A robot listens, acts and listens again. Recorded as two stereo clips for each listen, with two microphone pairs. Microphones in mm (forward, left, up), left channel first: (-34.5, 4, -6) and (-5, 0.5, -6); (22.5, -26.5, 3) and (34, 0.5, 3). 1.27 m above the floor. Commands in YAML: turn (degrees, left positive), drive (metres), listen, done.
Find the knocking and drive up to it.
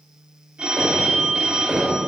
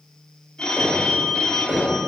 turn: 50
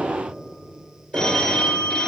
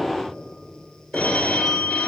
turn: -15
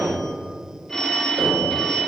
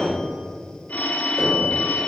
drive: 1.0
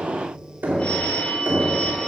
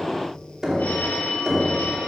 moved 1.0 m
drive: 1.0
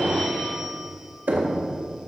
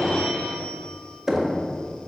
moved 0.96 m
drive: 1.0
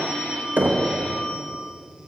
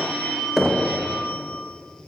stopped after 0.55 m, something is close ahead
turn: -15
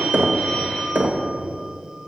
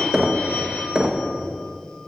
done: "Arrived at the knocking, straight ahead."